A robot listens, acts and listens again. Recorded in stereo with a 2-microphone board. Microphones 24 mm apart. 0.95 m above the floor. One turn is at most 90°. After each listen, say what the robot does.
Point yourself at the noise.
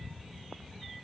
Keep listening.
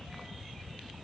Keep listening.
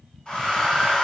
Turn 35° left.
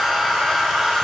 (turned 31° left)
Found it: a hair dryer, straight ahead.